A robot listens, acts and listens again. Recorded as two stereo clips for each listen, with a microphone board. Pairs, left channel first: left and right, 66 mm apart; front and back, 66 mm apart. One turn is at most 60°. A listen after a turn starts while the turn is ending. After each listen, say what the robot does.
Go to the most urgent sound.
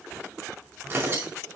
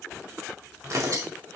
Keep listening.
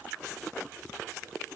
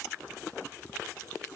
Keep listening.
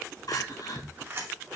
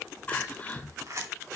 Turn 60° left.
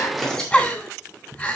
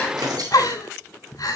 Turn 20° left.
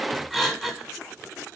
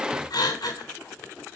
Drive 1.0 m forward.
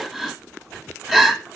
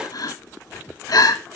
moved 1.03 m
Drive 1.0 m forward.
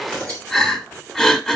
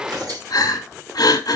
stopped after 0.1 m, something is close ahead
Turn 10° left.
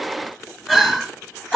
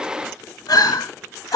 I am next to the crying.